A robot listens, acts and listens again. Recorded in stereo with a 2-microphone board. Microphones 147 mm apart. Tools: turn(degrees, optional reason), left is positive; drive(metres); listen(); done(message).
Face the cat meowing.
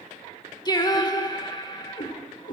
turn(degrees=65, reason="The cat meowing: about 65° left or 115° left.")
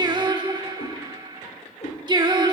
turn(degrees=40, reason="So it is at 40° left.")
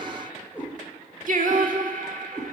turn(degrees=-15, reason="The cat meowing is now 15° right.")
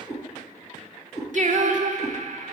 done("Found it: a cat meowing, straight ahead.")